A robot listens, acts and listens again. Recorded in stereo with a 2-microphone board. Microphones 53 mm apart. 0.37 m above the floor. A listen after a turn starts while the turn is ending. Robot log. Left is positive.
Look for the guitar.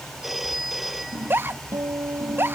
note: The guitar: about 75° right or 105° right.
cmd yaw -75
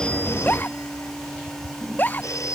cmd idle
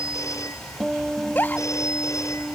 end: Facing the guitar.